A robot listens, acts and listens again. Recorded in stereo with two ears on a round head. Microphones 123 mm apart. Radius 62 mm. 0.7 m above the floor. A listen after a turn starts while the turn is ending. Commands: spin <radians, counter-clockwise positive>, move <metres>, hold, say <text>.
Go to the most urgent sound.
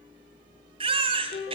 spin -0.70
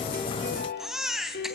move 1.0
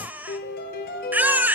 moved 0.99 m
spin -0.26
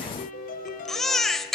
move 1.0
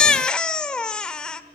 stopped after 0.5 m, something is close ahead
say Arrived at the baby crying, straight ahead.